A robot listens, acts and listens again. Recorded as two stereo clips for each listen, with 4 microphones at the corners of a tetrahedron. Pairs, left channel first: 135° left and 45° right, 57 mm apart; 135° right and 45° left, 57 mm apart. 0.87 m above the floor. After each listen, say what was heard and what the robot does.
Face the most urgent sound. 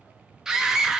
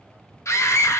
The scream: 120° right. Turn 120° right.
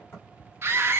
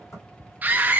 The scream is now 10° right. Turn 10° right.
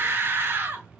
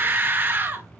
Facing the scream, 1 to 2 m away.